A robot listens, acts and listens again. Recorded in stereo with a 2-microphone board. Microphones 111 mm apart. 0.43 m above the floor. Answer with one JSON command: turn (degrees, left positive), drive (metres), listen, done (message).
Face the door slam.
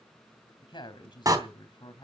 {"turn": -30}
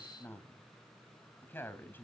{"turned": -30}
{"listen": true}
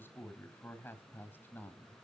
{"done": "I heard a door slam, but can't make it out now. It was about straight ahead or 120° right."}